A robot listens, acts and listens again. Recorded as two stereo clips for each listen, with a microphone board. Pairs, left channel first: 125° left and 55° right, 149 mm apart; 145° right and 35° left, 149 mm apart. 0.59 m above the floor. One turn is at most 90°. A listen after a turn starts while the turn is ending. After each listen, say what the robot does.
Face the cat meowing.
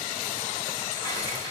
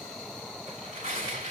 Keep listening.
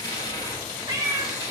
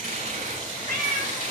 Turn 10° left.
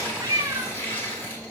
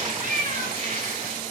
Turn 10° left.
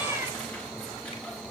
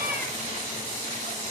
Keep listening.
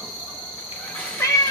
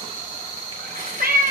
Turn 55° left.
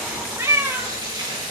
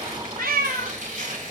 Turn 20° left.
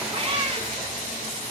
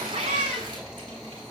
Found it: a cat meowing, straight ahead.